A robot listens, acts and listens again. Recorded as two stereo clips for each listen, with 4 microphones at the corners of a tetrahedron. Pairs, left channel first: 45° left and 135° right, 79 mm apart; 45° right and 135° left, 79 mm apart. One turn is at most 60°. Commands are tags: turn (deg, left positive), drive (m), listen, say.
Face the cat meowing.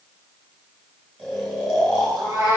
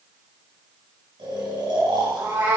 <turn deg="-60"/>
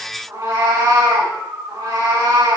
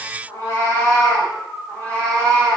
<turn deg="-60"/>
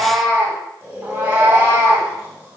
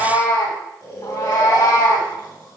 <turn deg="-60"/>
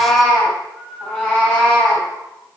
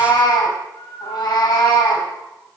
<turn deg="-20"/>
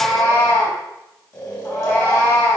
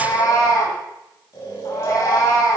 <say>Facing the cat meowing, 2 to 4 m away.</say>